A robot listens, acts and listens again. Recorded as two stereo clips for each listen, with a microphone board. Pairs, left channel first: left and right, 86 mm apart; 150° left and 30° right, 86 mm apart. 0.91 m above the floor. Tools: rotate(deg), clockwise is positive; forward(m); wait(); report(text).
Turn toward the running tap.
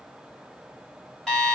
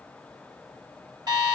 wait()
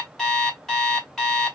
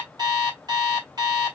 wait()
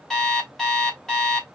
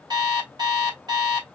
report("I can't make out a running tap, only an alarm clock.")